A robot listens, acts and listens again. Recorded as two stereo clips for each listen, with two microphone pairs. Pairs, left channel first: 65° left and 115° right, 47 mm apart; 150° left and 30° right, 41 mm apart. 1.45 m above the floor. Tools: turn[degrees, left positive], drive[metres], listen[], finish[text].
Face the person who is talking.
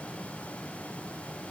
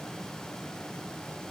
Action: listen[]
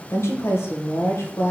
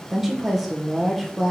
Thought: The woman speaking: 55° left.
Action: turn[55]
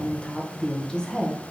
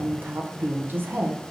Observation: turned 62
Action: finish[Facing the woman speaking.]